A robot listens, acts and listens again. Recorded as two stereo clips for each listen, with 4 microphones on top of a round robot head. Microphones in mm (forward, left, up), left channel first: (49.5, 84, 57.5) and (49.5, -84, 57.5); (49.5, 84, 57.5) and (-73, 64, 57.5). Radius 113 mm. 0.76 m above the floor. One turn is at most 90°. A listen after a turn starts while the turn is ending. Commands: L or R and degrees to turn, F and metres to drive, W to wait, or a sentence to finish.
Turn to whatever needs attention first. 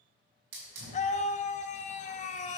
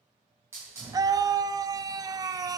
L90
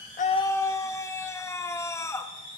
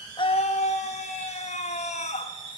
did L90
L20
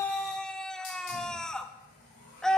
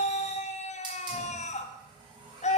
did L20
Facing the scream.